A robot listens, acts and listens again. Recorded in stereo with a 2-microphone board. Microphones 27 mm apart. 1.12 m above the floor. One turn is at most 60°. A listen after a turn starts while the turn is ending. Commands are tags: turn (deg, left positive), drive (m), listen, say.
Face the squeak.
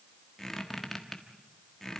<turn deg="15"/>
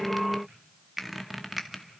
<say>Found it: a squeak, straight ahead.</say>